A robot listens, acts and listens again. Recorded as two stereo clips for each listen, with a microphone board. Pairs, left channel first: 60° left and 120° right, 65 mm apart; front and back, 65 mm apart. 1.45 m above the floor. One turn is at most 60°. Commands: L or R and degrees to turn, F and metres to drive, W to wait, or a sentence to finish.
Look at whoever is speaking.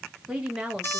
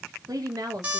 L60
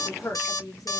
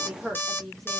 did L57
L60
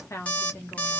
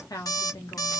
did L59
L10
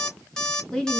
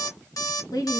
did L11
R20
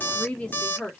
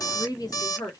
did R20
R15
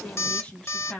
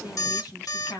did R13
R10
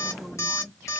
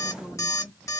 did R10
W
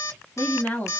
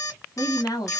Facing the woman speaking, 1 to 2 m away.